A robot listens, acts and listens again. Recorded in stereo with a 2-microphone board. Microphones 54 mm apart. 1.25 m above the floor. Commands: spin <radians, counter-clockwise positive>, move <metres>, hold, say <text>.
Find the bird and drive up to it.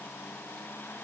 hold
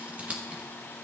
hold
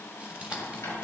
spin 1.13
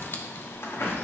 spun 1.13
spin 0.87
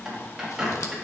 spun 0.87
spin -0.26
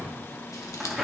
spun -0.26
move 1.0
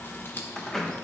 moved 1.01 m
move 1.0
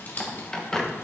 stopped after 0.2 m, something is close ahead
spin 0.17
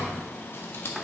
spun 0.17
say Arrived at the bird, straight ahead.